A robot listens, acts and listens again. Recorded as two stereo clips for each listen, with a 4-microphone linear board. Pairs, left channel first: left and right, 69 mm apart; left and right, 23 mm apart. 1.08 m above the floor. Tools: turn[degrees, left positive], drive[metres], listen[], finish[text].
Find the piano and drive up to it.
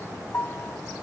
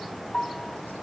Thought: The piano: about 30° left or 150° left.
Action: turn[30]
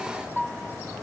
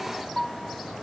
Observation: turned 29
Action: drive[1.0]
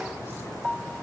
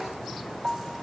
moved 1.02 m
Action: drive[1.0]
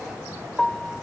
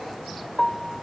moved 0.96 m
Action: drive[1.0]
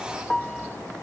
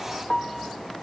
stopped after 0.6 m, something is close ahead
Action: finish[Arrived at the piano, straight ahead.]